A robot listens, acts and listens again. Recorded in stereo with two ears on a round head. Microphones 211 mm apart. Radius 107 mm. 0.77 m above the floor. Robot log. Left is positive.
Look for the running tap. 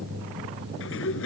cmd idle
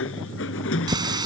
note: The running tap: about 20° right or 160° right.
cmd yaw -20
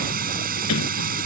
note: So it is at 140° right.
cmd yaw -140
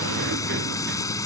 note: The running tap is now 15° left.
cmd yaw +15
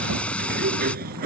end: Found it: a running tap, straight ahead.